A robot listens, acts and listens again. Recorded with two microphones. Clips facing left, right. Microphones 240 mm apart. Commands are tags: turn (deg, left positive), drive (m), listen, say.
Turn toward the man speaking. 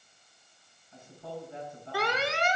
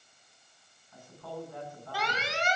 <turn deg="25"/>
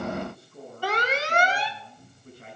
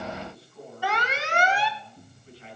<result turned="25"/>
<turn deg="130"/>
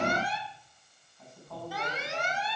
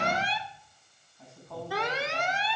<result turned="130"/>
<say>Facing the man speaking.</say>